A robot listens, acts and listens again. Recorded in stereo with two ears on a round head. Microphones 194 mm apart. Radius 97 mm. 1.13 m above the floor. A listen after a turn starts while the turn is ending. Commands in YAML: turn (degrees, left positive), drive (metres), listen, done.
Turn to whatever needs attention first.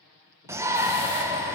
turn: -30
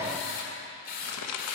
listen: true
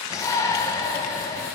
turn: 15
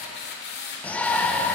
done: "Found it: a shout, straight ahead, under 1 m away."